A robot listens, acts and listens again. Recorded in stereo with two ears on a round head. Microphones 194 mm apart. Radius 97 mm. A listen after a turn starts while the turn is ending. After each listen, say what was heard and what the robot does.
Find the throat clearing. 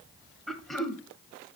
Turn 30° left.
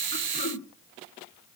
So it is at 145° left. Turn 145° left.
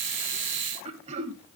The throat clearing is now 30° right. Turn 30° right.
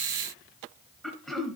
Facing the throat clearing.